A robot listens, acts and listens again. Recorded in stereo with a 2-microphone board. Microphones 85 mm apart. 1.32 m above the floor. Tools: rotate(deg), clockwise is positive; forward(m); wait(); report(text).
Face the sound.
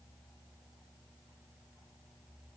wait()
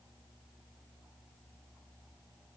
wait()
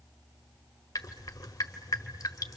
rotate(-40)
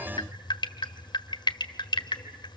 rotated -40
rotate(-90)
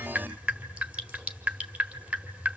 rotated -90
rotate(15)
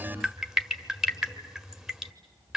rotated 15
report("Facing the dripping, 1 to 2 m away.")